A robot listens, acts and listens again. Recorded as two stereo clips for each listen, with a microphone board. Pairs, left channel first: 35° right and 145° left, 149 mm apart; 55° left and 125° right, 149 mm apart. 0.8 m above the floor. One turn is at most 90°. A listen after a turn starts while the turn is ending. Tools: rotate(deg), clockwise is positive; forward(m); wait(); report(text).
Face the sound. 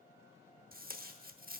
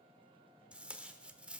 rotate(-90)
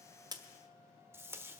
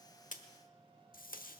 rotate(-75)
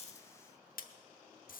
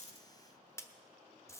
rotate(15)
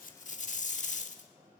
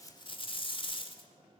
report("Facing the tape being pulled.")